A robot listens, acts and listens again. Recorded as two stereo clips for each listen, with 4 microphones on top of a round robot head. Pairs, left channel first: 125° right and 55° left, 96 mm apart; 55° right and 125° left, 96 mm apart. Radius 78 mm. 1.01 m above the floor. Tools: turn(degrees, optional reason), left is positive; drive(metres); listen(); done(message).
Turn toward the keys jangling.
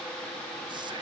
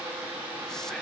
listen()
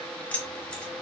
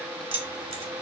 turn(degrees=155, reason="The keys jangling: 155° left.")
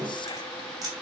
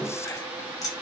done("Found it: keys jangling, straight ahead, 2 to 4 m away.")